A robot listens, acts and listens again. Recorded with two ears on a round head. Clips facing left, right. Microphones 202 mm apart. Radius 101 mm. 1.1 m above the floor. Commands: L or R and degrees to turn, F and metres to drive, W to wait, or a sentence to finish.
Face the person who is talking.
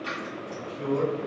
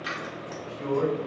L20
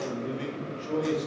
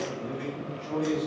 L135
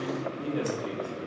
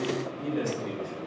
Facing the man speaking.